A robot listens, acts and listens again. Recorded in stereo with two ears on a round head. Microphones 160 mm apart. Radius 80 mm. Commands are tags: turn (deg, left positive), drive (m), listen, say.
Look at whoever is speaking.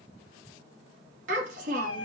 <turn deg="-45"/>
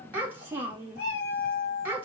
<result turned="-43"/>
<turn deg="-15"/>
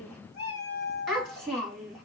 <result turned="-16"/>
<say>Facing the child speaking.</say>